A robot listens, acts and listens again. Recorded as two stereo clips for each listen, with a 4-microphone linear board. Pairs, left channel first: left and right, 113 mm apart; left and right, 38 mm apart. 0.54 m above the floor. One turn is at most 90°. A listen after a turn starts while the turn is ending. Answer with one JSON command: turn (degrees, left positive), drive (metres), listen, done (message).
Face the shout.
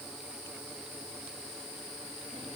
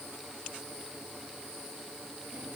{"listen": true}
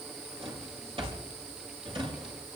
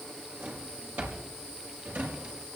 {"listen": true}
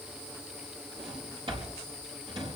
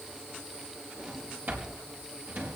{"done": "I can't make out a shout, only a drawer."}